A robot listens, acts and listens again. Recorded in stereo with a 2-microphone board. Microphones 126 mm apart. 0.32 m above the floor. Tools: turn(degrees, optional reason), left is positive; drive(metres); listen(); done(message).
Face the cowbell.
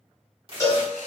turn(degrees=25, reason="The cowbell: about 25° left or 155° left.")
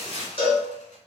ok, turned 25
turn(degrees=130, reason="So it is at 130° left.")
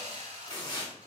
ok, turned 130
listen()
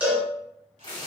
turn(degrees=-10, reason="The cowbell is now 10° right.")
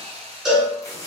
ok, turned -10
done("Found it: a cowbell, straight ahead.")